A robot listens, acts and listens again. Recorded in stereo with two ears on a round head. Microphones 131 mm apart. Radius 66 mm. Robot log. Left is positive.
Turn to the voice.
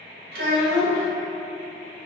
note: The child speaking: about 70° right or 110° right.
cmd yaw -70
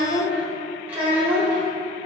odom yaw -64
note: So it is at 10° right.
cmd yaw -10
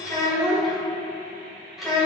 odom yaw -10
end: Found it: a child speaking, straight ahead, under 1 m away.